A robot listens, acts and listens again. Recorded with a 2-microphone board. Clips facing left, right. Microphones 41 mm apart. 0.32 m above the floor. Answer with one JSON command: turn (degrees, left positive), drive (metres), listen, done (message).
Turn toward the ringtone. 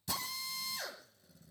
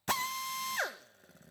{"listen": true}
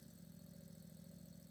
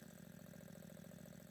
{"listen": true}
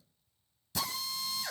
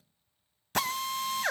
{"done": "I can't make out a ringtone to turn to."}